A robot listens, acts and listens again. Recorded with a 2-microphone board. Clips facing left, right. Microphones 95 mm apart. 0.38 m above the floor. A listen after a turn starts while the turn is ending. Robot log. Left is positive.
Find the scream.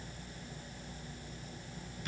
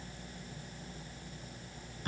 cmd idle
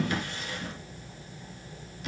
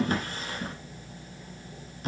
cmd idle
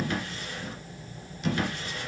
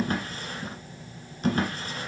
end: I can't make out a scream, only a drawer.